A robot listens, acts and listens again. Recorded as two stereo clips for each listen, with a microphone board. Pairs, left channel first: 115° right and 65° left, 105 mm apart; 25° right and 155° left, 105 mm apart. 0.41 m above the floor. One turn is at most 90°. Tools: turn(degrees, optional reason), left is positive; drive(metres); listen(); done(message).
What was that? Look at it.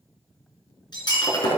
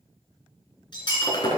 turn(degrees=-65, reason="The breaking glass: 65° right.")
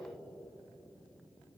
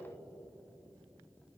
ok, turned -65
done("Facing where the breaking glass came from. I can't hear it now.")